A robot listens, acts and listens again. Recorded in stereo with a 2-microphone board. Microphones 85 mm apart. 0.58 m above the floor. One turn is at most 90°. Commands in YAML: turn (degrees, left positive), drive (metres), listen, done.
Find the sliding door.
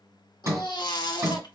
turn: -35
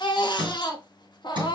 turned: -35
turn: -90
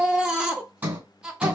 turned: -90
turn: -20
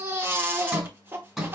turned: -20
done: "Found it: a sliding door, straight ahead, 2 to 4 m away."